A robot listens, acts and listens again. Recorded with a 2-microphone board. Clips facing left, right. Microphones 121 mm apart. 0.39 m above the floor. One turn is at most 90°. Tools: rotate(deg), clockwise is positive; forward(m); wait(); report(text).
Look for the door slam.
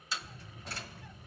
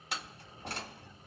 rotate(65)
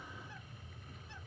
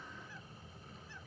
wait()
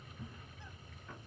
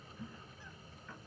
report("I heard a door slam, but can't make it out now. It was about straight ahead or 50° right.")